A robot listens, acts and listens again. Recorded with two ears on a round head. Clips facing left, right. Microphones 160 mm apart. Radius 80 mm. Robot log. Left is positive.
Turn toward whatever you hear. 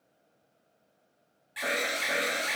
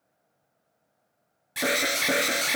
note: The alarm: about 55° right or 125° right.
cmd yaw -55
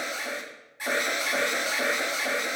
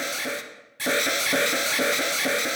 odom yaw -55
note: So it is at 50° right.
cmd yaw -50
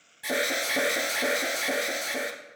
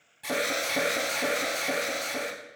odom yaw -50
note: The alarm is now 15° left.
cmd yaw +15
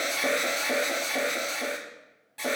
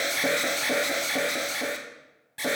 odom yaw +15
note: The alarm is now 10° right.
cmd yaw -10
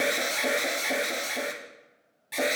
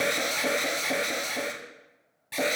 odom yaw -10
end: Facing the alarm, under 1 m away.